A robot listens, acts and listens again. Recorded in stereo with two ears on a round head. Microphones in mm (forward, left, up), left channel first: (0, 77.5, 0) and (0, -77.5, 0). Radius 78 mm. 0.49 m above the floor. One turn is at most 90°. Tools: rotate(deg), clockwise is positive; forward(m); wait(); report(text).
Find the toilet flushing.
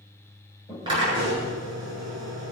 rotate(-20)
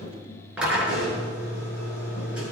wait()
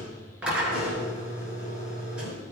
wait()
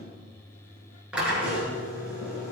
report("I heard a toilet flushing, but can't make it out now. It was about straight ahead or 140° left.")